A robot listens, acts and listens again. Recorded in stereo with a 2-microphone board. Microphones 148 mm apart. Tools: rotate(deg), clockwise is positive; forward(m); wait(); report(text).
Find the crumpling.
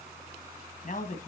wait()
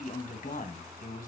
wait()
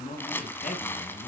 rotate(-30)
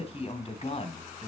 wait()
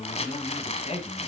rotate(-130)
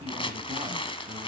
rotate(-35)
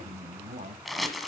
report("Found it: crumpling, straight ahead.")